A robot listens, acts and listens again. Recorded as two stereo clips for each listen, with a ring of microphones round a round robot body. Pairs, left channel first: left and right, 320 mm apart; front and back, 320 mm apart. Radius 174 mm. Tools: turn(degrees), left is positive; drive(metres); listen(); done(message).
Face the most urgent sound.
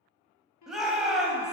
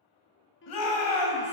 done("Found it: a shout, straight ahead.")